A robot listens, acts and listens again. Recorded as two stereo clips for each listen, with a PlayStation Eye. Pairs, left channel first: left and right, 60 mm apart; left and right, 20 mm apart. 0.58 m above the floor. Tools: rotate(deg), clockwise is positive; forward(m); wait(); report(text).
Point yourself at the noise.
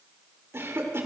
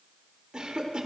rotate(45)
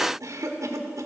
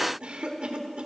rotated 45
rotate(85)
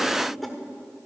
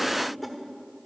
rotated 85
report("Facing the cough, 1 to 2 m away.")